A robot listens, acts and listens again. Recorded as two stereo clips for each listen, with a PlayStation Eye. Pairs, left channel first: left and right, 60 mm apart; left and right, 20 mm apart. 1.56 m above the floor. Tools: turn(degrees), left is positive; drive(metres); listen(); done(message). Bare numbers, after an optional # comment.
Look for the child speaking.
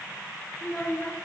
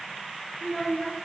# The child speaking: about 15° left or 165° left.
turn(15)
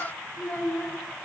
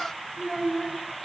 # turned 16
# The child speaking: about 25° left or 155° left.
turn(25)
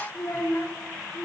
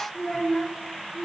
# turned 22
# So it is at 135° left.
turn(135)
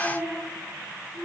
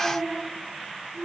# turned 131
# The child speaking is now 10° left.
turn(10)
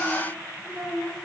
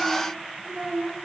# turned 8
done("Facing the child speaking, 2 to 4 m away.")